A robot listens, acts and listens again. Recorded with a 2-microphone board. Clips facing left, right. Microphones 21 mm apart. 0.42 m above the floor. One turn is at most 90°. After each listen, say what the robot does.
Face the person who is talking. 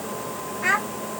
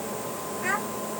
Turn 35° left.
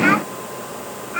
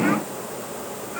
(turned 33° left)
Turn 90° left.
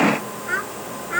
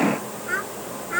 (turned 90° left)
Facing the child speaking.